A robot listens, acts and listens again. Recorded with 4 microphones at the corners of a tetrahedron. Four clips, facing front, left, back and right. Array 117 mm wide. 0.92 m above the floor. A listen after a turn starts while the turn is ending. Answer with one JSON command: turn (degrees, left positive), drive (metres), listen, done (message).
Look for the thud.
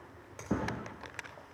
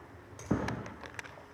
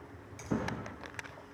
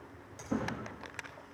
{"turn": 65}
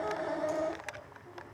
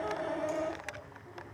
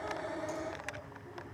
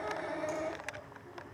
{"done": "I heard a thud from this way, but can't make it out now."}